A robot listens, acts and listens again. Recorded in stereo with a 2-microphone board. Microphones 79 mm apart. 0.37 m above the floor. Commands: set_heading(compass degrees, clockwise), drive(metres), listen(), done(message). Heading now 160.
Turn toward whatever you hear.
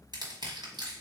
set_heading(235)
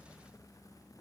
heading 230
listen()
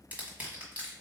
set_heading(250)
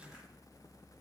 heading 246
listen()
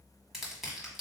done("Found it: crushing, straight ahead, 1 to 2 m away.")